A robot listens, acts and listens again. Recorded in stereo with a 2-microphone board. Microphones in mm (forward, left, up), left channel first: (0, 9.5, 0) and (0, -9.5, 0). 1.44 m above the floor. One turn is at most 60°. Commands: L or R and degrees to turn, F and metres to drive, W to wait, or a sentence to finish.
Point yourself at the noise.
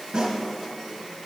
R60
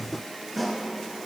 Found it: a snare drum, straight ahead, 2 to 4 m away.